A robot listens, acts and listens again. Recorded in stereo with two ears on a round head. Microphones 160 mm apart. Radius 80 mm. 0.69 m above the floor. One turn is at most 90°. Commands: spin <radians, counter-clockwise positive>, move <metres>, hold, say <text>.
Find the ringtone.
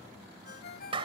spin 1.05
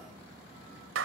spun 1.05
hold
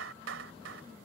hold
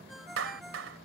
say Facing the ringtone.